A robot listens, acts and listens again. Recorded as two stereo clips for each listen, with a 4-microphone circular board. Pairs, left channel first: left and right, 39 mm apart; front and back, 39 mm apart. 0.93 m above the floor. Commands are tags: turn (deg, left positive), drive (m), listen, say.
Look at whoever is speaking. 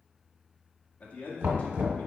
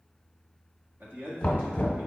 <turn deg="145"/>
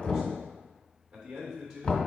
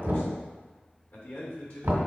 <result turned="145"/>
<turn deg="-20"/>
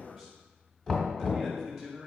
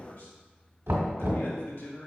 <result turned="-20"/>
<say>Found it: a man speaking, straight ahead, 2 to 4 m away.</say>